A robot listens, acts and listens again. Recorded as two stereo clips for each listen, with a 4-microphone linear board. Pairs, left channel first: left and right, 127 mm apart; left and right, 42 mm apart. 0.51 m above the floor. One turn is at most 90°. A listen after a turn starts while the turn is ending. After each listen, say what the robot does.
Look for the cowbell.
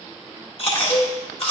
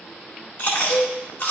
Turn 40° left.
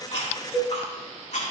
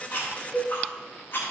Facing the cowbell.